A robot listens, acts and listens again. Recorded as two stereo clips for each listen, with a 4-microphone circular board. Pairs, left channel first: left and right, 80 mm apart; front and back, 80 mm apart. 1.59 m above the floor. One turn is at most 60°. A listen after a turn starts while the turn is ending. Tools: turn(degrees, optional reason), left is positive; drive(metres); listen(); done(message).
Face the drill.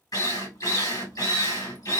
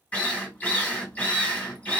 turn(degrees=60, reason="The drill: 65° left.")
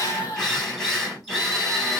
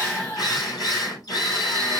done("Facing the drill.")